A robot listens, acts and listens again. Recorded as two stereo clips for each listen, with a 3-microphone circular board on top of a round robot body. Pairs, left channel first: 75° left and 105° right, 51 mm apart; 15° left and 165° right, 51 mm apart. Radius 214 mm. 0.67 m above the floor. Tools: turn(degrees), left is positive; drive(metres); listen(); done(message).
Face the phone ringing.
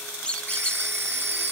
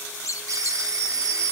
turn(degrees=-150)
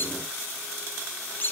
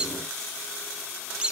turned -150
listen()
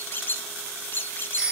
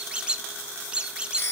turn(degrees=-30)
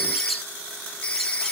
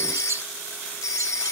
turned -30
done("Facing the phone ringing, 1 to 2 m away.")